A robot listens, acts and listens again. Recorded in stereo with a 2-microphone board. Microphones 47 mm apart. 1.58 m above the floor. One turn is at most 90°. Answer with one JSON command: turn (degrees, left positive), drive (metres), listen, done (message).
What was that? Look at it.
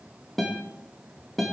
{"turn": 30}
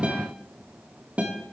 {"turn": -25}
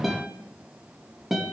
{"done": "Facing the guitar, 2 to 4 m away."}